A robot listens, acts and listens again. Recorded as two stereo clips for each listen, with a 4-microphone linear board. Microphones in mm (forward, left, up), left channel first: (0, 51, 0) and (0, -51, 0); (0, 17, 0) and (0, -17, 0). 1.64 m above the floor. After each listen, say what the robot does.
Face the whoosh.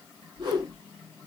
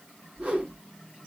Turn 45° right.
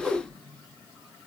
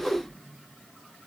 Facing the whoosh.